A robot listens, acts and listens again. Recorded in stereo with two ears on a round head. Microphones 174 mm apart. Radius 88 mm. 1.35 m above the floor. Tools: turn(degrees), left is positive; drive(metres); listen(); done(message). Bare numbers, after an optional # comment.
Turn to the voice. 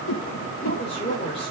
# The woman speaking: about 30° left or 150° left.
turn(30)
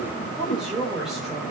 done("Found it: a woman speaking, straight ahead.")